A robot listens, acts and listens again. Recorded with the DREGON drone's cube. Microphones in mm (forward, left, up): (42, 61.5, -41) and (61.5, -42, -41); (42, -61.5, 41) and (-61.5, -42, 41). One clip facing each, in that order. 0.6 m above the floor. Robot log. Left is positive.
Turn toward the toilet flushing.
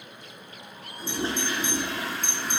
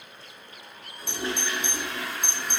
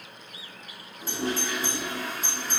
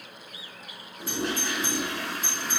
note: The toilet flushing: 160° left.
cmd yaw +160
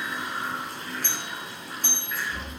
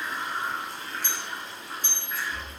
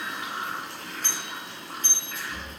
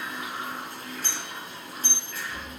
note: The toilet flushing is now 15° right.
cmd yaw -15
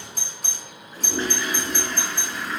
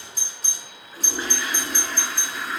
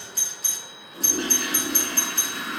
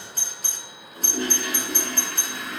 end: Facing the toilet flushing, over 4 m away.